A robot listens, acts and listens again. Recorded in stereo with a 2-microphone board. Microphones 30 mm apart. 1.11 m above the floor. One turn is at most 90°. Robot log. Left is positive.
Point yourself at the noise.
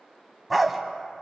cmd yaw -30
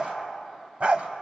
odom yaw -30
note: So it is at 135° right.
cmd yaw -90
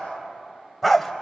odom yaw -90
end: Found it: a dog barking, straight ahead.